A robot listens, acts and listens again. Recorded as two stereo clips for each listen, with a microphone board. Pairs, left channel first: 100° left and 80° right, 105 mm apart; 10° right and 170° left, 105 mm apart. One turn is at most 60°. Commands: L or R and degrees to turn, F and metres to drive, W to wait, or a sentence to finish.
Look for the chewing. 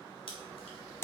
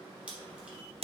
L60
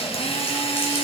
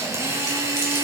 L30
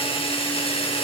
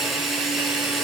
W
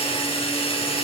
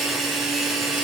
Facing where the chewing came from. I can't hear it now.